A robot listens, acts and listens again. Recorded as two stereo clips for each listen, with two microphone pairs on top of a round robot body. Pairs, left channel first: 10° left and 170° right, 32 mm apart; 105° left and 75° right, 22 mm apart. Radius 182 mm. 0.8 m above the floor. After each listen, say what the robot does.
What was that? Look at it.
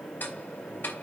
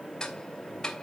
Turn 35° left.
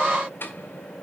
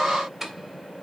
Found it: ticking, straight ahead.